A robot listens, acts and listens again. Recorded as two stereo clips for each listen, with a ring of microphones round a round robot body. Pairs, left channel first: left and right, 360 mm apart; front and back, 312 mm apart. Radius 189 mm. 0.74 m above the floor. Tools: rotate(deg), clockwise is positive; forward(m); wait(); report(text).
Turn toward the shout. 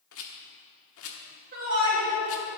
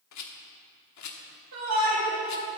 rotate(145)
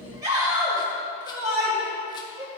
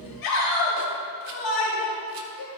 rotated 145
rotate(10)
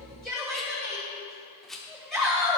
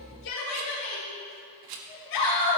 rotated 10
report("Facing the shout, 2 to 4 m away.")